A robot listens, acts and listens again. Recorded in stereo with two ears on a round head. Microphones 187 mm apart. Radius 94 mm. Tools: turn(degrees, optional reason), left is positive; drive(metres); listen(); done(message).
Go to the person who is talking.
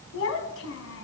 turn(degrees=90)
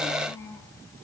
turn(degrees=15, reason="So it is at 15° left.")
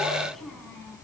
drive(metres=1.0)
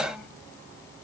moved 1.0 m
listen()
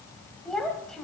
drive(metres=1.0)
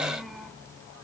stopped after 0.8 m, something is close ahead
done("I am next to the child speaking.")